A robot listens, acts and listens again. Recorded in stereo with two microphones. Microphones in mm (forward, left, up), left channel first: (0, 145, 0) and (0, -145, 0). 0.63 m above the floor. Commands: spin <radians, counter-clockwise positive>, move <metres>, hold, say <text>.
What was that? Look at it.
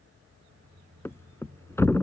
spin 0.52
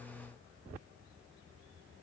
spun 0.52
hold
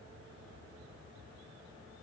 say I heard a thud, but can't make it out now. It was about 20° right or 140° left.